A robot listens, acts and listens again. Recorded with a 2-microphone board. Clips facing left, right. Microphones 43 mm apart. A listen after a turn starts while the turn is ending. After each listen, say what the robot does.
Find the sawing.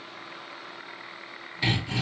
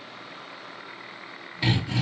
Turn 30° right.
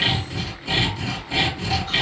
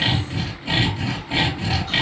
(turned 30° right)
Turn 150° right.
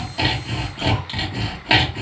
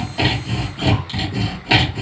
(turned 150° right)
Turn 25° left.
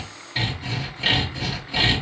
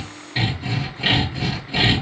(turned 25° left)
Found it: sawing, straight ahead.